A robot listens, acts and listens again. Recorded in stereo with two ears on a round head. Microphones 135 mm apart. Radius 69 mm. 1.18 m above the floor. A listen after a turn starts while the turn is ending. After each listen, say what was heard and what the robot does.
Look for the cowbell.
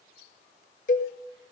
The cowbell: about 55° left or 125° left. Turn 55° left.
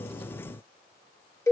So it is at 20° left. Turn 20° left.
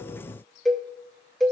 Facing the cowbell.